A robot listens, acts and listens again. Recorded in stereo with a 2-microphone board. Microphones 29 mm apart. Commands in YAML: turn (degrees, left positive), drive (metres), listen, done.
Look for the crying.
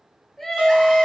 turn: 30
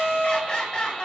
turn: 145
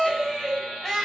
turn: 10
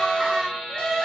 done: "Found it: crying, straight ahead."